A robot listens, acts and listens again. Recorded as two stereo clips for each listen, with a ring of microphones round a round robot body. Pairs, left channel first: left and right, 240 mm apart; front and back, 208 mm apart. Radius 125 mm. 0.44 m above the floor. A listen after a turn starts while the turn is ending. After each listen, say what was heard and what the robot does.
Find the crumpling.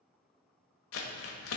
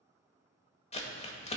The crumpling: 60° left. Turn 60° left.
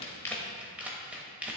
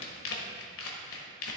Found it: crumpling, straight ahead, 1 to 2 m away.